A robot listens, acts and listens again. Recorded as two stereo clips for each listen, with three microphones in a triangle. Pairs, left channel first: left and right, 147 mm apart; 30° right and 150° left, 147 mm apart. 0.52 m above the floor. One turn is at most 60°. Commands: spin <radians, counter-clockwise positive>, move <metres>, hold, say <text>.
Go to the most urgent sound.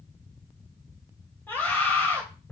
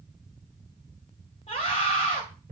spin 0.26
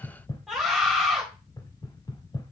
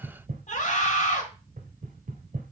move 1.0
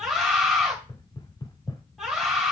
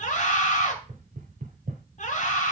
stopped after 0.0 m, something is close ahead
say Something is in my way. I am facing the scream but have not reached it.